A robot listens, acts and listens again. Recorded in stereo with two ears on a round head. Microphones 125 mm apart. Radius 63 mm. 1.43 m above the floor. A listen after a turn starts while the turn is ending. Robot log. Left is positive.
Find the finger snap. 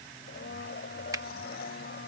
note: The finger snap: about 25° right or 155° right.
cmd yaw -25
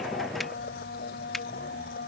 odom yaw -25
cmd idle
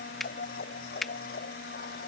end: Facing the finger snap.